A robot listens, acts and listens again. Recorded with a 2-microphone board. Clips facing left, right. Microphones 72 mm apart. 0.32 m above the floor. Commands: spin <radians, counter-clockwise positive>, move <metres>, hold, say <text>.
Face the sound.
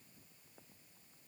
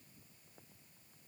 hold
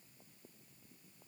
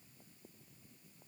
hold
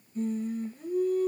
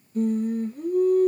spin -0.96
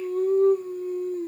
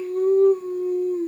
spin -1.40
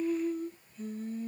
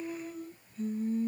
spin -0.26
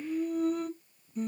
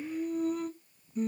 say Found it: singing, straight ahead, 2 to 4 m away.